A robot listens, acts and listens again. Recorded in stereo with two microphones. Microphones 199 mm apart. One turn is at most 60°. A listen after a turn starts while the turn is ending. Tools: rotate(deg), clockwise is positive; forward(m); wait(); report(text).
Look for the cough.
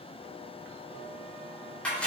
wait()
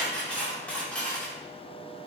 wait()
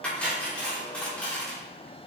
report("I can't make out a cough to turn to.")